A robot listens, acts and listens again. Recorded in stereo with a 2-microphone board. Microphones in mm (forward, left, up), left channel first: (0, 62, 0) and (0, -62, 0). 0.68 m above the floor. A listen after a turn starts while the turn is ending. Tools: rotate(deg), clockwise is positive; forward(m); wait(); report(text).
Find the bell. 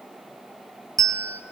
rotate(30)
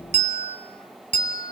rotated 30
rotate(115)
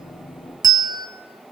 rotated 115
rotate(35)
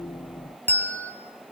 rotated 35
rotate(-15)
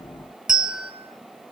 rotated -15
report("Found it: a bell, straight ahead.")